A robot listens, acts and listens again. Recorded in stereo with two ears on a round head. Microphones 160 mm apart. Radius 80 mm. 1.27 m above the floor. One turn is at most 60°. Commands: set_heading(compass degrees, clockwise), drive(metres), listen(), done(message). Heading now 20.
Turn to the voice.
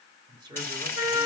set_heading(45)
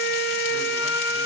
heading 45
listen()
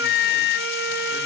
listen()
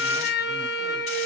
done("I heard a man speaking, but can't make it out now. It was about straight ahead or 130° right.")